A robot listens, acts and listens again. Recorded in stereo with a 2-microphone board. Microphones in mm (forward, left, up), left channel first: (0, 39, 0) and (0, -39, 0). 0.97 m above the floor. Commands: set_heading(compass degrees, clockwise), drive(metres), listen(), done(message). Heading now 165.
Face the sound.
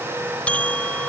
set_heading(150)
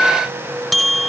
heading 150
done("Found it: a bell, straight ahead.")